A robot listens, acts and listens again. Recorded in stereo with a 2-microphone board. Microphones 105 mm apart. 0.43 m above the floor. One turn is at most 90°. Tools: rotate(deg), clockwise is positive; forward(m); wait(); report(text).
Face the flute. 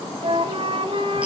rotate(65)
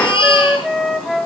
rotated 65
report("Facing the flute, 1 to 2 m away.")